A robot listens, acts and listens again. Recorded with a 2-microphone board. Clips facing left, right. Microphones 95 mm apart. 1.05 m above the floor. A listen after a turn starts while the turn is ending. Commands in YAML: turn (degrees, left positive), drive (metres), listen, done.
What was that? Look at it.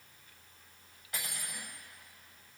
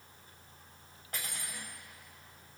turn: -45
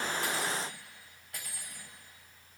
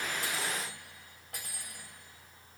turn: -90
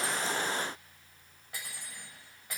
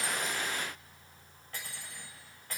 turn: 10
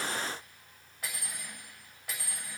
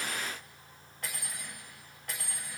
done: "Facing the cutlery clinking, 2 to 4 m away."